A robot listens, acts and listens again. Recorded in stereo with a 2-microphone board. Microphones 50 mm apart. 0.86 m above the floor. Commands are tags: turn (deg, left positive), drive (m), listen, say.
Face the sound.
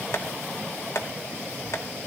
<turn deg="70"/>
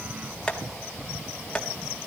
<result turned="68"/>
<turn deg="20"/>
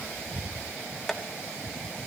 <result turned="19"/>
<say>Found it: tapping, straight ahead.</say>